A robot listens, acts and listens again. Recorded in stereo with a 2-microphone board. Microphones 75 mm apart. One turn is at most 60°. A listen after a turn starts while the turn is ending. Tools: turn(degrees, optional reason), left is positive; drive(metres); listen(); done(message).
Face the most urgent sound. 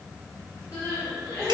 turn(degrees=45, reason="The crying: about 45° left or 135° left.")
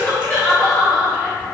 done("Found it: crying, straight ahead.")